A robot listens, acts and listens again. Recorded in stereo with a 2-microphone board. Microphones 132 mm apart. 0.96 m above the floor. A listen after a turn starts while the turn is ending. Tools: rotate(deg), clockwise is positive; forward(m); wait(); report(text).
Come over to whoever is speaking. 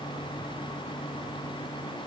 wait()
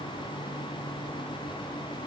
wait()
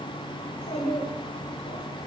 rotate(-90)
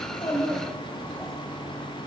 forward(1.0)
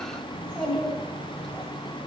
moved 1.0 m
forward(1.0)
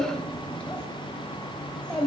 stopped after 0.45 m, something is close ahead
rotate(-10)
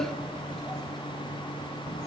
wait()
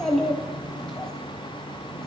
report("Arrived at the child speaking, straight ahead.")